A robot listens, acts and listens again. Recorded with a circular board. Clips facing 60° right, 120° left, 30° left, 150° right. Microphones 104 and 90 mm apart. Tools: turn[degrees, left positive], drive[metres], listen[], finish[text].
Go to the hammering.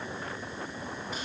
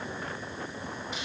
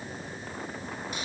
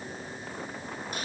Action: listen[]
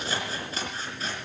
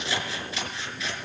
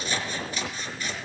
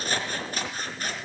Action: listen[]
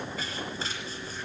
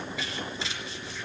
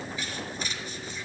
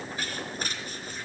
Action: finish[I can't make out hammering to turn to.]